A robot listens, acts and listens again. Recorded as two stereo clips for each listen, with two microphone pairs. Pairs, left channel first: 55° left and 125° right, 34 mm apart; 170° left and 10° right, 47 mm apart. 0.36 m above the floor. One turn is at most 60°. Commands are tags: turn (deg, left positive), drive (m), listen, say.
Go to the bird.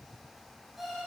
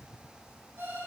<listen/>
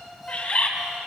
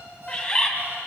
<turn deg="60"/>
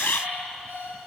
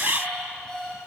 <turn deg="35"/>
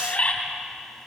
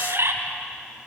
<drive m="1.0"/>
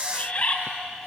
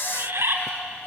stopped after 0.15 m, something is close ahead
<say>Blocked. The bird is further on, straight ahead.</say>